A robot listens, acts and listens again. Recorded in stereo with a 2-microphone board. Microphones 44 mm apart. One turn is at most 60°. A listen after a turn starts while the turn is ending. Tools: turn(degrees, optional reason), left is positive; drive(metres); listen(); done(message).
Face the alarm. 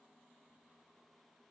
listen()
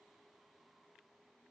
listen()
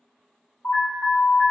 turn(degrees=60, reason="The alarm: about 60° left or 120° left.")
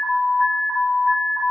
turn(degrees=20, reason="So it is at 20° left.")
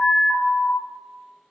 done("Found it: an alarm, straight ahead, 1 to 2 m away.")